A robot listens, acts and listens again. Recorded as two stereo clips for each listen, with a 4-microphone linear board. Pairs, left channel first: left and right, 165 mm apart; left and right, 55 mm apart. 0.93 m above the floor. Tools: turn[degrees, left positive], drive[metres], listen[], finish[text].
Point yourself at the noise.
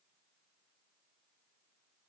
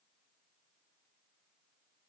Action: listen[]
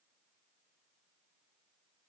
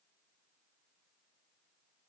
Action: listen[]
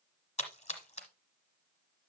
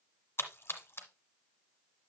Thought: The splash: about 40° left or 140° left.
Action: turn[40]
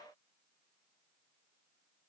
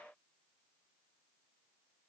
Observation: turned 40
Action: listen[]
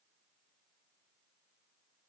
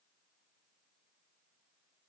Action: finish[I heard a splash, but can't make it out now. It was about straight ahead or 100° left.]